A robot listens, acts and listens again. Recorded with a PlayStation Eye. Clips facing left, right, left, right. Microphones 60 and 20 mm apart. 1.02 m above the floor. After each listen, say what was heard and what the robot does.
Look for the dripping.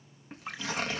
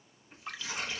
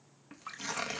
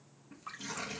Turn 30° left.
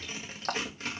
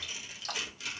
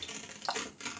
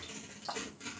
So it is at 135° left. Turn 135° left.
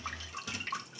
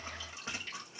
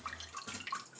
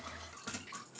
The dripping is now 55° left. Turn 55° left.
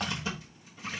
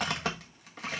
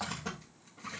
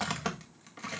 Keep listening.
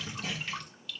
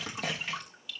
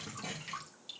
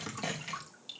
The dripping is now 10° right. Turn 10° right.
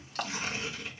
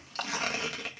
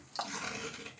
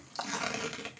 Facing the dripping.